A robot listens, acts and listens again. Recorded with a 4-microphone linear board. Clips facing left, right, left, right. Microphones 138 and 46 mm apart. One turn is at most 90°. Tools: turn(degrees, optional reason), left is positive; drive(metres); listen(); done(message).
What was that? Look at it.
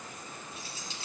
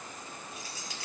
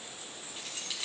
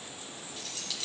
turn(degrees=25, reason="The keys jangling: about 25° left or 155° left.")
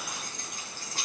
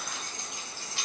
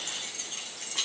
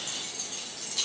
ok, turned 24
turn(degrees=90, reason="So it is at 140° left.")
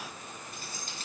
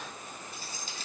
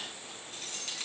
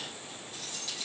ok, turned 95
turn(degrees=50, reason="The keys jangling is now 50° left.")
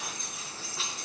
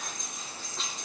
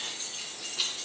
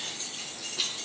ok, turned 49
done("Facing the keys jangling, over 4 m away.")